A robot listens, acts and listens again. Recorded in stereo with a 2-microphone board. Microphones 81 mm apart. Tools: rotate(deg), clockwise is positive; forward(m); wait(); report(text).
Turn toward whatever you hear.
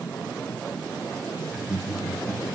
rotate(20)
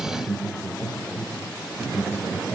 rotate(30)
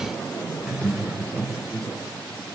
rotate(25)
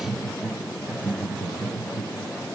report("Found it: laughter, straight ahead.")